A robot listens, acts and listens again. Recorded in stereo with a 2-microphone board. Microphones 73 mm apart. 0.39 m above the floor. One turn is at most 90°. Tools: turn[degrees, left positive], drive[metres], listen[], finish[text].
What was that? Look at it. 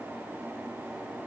Action: listen[]
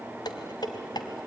Thought: The dishes clattering: about 75° left or 105° left.
Action: turn[75]
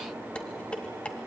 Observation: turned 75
Thought: So it is at 15° left.
Action: turn[15]
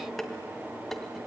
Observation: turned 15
Action: finish[Facing the dishes clattering.]